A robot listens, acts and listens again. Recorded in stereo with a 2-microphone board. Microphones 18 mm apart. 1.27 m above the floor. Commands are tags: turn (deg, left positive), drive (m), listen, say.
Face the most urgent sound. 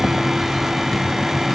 <listen/>
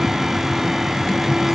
<listen/>
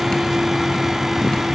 <say>I can't make out anything urgent to turn to.</say>